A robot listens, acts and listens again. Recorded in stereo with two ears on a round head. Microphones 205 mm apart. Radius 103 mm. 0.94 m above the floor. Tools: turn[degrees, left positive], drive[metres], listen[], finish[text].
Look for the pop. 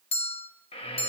Action: listen[]
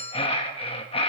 Action: listen[]
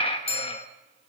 Action: finish[I can't make out a pop to turn to.]